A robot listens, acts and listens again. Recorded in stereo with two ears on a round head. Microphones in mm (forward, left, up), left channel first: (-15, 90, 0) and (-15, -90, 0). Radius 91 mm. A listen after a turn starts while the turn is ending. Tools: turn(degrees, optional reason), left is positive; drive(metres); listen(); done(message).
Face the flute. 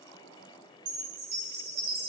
listen()
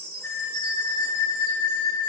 turn(degrees=65, reason="The flute: about 65° left or 115° left.")
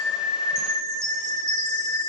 done("Facing the flute.")